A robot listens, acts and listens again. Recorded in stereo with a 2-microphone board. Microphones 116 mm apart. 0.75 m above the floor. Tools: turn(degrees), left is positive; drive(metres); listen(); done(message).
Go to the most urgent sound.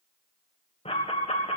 turn(degrees=60)
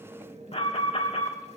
turn(degrees=60)
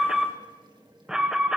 drive(metres=1.0)
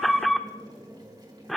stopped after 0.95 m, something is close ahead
done("Arrived at the alarm, straight ahead.")